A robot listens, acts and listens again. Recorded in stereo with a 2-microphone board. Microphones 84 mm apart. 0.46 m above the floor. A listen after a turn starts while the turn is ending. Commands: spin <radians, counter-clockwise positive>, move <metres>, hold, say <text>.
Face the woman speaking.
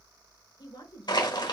spin 1.05
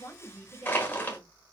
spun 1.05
spin 0.35
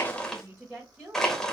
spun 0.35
spin -0.44
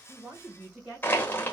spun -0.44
spin -0.26
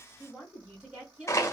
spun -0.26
spin -0.17
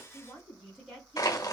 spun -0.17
say Facing the woman speaking.